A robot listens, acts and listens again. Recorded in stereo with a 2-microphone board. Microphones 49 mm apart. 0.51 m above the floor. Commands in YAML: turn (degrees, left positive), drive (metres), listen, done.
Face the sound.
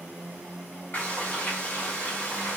turn: 40
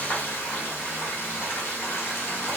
turn: 95
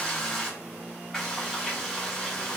turn: 10
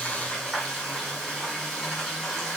done: "Found it: frying, straight ahead."